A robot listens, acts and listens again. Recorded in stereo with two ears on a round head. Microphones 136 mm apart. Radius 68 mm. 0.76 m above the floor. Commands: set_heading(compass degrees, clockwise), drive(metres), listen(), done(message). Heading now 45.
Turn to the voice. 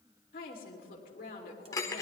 set_heading(345)
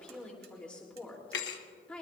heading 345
set_heading(335)
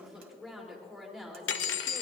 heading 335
done("Found it: a woman speaking, straight ahead, 2 to 4 m away.")